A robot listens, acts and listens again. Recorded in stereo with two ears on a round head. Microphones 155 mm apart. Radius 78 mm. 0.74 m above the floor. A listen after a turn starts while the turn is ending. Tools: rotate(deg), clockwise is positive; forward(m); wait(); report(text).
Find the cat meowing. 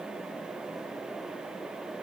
wait()
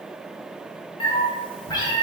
rotate(-25)
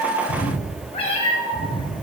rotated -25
rotate(-25)
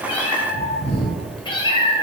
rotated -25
rotate(-30)
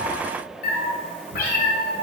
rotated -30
rotate(-120)
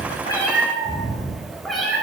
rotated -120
report("Facing the cat meowing, 1 to 2 m away.")